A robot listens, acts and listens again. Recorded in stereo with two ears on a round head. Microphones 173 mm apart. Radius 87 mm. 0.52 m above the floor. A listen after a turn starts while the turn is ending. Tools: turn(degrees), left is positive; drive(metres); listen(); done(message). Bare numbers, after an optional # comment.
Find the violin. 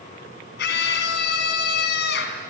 listen()
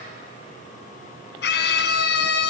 listen()
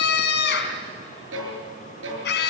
turn(-90)
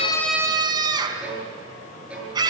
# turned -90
done("Facing the violin, over 4 m away.")